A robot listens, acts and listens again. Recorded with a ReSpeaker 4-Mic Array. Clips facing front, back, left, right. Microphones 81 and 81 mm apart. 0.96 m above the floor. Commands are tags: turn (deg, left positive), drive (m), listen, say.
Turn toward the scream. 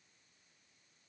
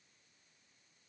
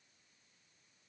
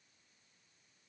<listen/>
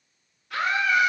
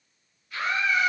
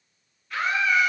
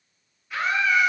<say>Found it: a scream, straight ahead, 2 to 4 m away.</say>